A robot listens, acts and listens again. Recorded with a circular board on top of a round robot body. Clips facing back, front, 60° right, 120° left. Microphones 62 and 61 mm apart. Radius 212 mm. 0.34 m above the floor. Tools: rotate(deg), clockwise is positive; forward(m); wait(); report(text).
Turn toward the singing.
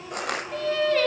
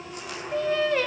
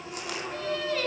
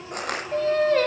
rotate(-75)
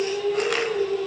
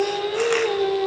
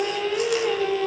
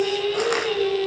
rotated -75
rotate(-10)
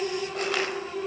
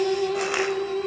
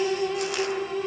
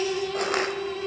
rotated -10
rotate(-15)
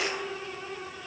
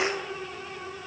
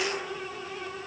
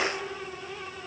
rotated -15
wait()
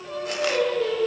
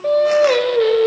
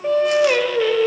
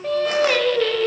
rotate(-20)
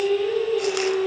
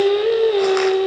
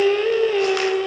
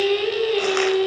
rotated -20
rotate(-10)
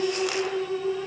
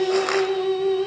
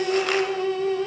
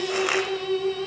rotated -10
report("Facing the singing.")